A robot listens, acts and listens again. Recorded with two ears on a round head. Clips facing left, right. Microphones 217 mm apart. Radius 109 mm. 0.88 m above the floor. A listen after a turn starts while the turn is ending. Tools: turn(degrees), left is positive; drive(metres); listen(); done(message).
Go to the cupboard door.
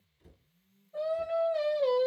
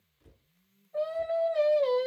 turn(degrees=55)
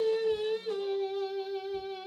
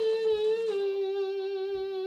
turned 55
listen()
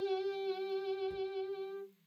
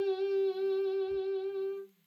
listen()
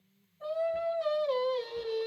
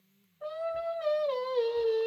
done("I heard a cupboard door, but can't make it out now. It was about straight ahead or 70° left. I did not reach it.")